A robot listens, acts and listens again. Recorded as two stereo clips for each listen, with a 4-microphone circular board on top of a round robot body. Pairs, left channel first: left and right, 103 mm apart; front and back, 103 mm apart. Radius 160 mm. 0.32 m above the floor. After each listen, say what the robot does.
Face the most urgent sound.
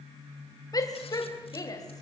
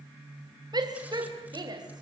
Turn 140° left.
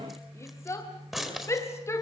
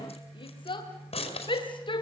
Turn 30° left.
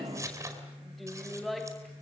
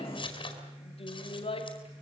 Found it: a shout, straight ahead, 2 to 4 m away.